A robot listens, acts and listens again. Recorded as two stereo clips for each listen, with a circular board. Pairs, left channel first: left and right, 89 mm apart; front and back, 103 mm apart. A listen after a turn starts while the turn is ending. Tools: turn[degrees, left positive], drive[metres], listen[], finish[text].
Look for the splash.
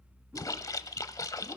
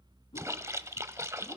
Thought: The splash: 125° left.
Action: turn[125]
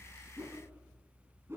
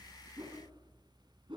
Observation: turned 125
Action: finish[Facing where the splash came from. I can't hear it now.]